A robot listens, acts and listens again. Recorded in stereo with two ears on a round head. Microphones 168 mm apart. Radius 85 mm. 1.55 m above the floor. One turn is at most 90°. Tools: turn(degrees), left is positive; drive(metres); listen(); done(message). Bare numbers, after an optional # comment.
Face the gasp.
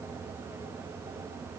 listen()
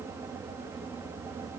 listen()
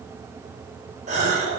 # The gasp: about 40° right or 140° right.
turn(-40)
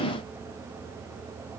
listen()
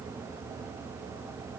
done("I heard a gasp, but can't make it out now. It was about straight ahead or 100° right.")